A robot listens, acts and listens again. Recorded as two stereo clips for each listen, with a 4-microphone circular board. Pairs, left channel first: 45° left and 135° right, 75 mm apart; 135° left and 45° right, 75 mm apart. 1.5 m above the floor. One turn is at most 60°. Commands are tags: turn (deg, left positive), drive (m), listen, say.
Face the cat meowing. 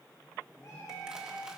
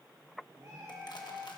<say>Found it: a cat meowing, straight ahead.</say>